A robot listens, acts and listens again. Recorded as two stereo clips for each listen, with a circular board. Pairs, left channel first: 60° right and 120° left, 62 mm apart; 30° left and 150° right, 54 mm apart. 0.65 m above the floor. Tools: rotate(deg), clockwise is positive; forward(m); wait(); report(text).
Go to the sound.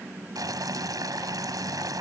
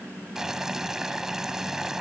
rotate(-130)
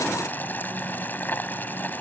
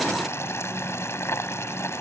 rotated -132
forward(1.0)
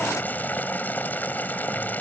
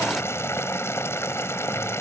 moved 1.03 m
forward(1.0)
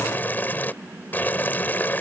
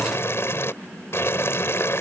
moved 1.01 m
forward(1.0)
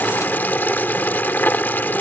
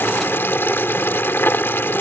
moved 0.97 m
forward(1.0)
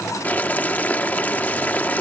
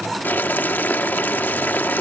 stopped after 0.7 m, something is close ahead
report("Arrived at the boiling, straight ahead.")